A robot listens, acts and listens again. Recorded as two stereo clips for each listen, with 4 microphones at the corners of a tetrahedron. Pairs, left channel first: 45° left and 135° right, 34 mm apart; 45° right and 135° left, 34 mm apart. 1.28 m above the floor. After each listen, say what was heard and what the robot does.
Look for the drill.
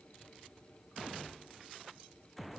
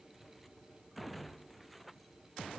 Keep listening.
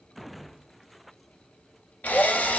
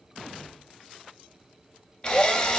The drill: 15° left. Turn 15° left.
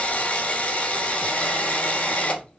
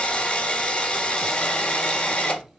Facing the drill.